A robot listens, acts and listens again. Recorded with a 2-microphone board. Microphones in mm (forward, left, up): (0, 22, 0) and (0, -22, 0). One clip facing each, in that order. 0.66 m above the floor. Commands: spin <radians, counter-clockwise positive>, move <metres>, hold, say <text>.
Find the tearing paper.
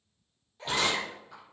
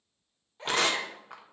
spin -1.05
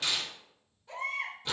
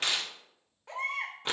spin -0.96
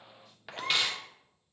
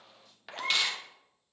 say Facing the tearing paper.